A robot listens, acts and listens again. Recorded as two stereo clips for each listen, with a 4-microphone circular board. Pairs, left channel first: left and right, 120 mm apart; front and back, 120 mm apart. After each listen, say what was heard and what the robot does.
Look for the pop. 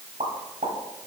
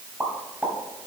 The pop: 105° right. Turn 105° right.
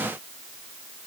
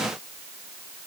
Facing where the pop came from. I can't hear it now.